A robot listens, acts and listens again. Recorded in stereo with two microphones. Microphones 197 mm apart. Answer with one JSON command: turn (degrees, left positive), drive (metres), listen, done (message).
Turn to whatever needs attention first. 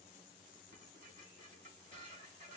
{"listen": true}
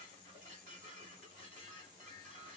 {"listen": true}
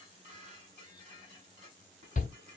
{"turn": 40}
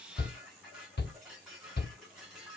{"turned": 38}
{"turn": 95}
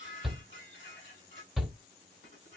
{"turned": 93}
{"done": "Facing the shout, under 1 m away."}